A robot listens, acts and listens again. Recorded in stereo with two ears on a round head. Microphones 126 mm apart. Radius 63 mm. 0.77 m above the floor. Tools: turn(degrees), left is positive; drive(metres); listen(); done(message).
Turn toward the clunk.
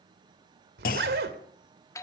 turn(degrees=70)
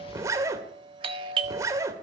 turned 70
listen()
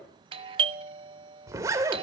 done("I heard a clunk, but can't make it out now. It was about straight ahead or 40° left.")